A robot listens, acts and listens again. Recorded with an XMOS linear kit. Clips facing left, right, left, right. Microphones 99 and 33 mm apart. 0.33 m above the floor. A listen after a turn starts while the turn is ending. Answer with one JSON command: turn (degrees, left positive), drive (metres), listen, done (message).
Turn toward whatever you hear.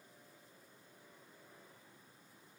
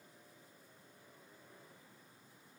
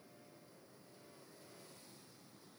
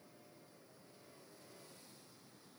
{"listen": true}
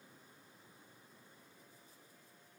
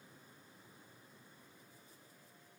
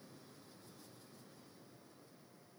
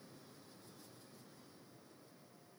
{"listen": true}
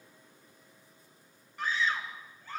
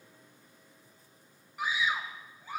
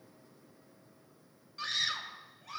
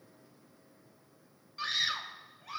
{"turn": -30}
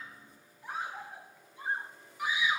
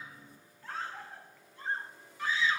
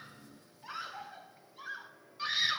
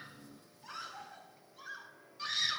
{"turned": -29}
{"turn": 15}
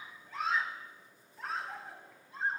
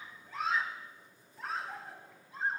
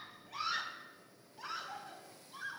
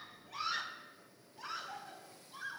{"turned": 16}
{"done": "Found it: a scream, straight ahead, 1 to 2 m away."}